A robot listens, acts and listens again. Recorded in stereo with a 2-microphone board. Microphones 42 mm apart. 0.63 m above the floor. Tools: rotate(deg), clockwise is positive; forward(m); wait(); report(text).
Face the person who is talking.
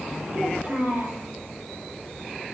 rotate(50)
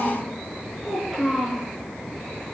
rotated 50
report("Found it: a child speaking, straight ahead, over 4 m away.")